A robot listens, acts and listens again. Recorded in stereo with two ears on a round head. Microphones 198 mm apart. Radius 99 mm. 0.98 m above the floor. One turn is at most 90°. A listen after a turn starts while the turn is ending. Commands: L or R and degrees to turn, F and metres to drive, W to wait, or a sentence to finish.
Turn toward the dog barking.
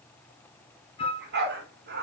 R50
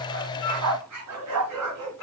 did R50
R85
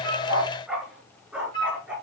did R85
Found it: a dog barking, straight ahead, over 4 m away.